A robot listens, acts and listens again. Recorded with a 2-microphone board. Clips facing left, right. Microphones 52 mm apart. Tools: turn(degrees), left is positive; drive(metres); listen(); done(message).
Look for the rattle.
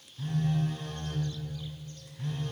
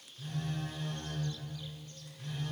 listen()
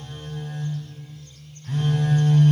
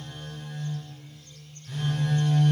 listen()
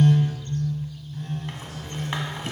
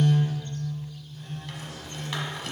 turn(degrees=30)
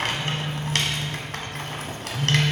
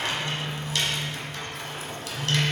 turn(degrees=115)
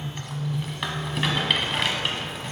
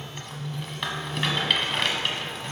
done("Facing the rattle.")